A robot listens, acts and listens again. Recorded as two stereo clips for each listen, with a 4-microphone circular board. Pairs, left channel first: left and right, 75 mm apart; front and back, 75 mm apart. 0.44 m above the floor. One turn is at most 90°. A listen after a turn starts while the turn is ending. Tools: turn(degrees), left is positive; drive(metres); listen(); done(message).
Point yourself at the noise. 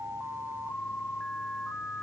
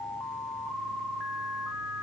listen()
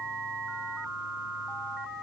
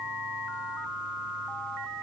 listen()
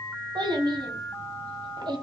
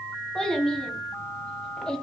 turn(degrees=-80)
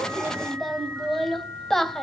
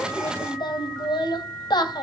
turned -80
done("Facing the child speaking.")